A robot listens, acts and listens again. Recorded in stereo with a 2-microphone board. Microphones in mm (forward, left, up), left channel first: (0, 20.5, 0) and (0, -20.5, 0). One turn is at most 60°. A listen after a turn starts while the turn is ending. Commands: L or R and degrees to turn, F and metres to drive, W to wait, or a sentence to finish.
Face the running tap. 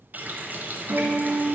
R50
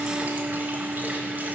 R60
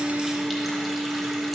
W
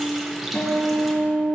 Facing the running tap, under 1 m away.